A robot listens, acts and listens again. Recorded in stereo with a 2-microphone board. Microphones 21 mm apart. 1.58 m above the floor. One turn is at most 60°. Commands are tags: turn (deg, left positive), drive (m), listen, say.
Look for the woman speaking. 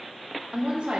<turn deg="-60"/>
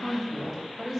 <turn deg="10"/>
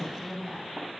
<turn deg="10"/>
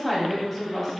<turn deg="15"/>
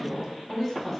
<say>Found it: a woman speaking, straight ahead, 2 to 4 m away.</say>